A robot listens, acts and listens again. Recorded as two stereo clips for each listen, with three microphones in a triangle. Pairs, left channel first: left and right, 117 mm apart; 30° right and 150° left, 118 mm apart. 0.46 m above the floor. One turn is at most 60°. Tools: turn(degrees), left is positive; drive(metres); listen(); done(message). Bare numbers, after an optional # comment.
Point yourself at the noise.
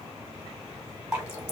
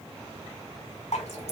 # The dripping: 15° right.
turn(-15)
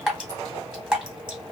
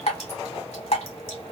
done("Facing the dripping.")